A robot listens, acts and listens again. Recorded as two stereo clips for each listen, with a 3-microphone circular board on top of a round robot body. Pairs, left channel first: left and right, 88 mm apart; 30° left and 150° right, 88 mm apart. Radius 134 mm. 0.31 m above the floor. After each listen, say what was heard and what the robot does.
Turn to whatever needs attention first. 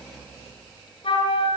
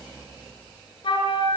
Keep listening.
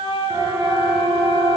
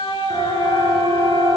The siren: 25° right. Turn 25° right.
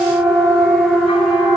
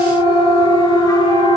Found it: a siren, straight ahead.